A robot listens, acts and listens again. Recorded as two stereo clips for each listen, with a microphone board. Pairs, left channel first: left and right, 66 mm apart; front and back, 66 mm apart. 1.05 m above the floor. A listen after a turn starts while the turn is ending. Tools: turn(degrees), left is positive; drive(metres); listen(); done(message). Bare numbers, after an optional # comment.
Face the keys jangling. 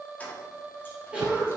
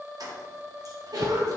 listen()
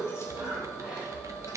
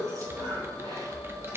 listen()
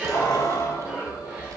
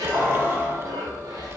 # The keys jangling: 115° left.
turn(115)
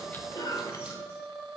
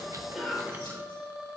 listen()
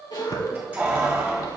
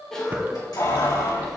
# The keys jangling is now 25° right.
turn(-25)
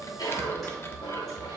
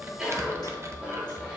listen()
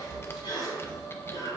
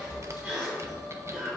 listen()
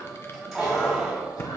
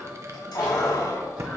done("Facing the keys jangling, 2 to 4 m away.")